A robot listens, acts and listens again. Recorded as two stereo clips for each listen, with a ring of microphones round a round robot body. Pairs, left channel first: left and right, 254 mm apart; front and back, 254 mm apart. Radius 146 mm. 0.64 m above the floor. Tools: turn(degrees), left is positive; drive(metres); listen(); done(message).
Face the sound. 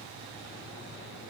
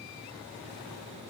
listen()
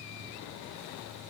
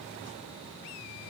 listen()
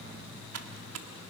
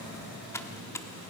turn(degrees=-80)
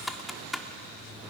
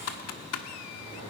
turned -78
done("Found it: typing on a keyboard, straight ahead.")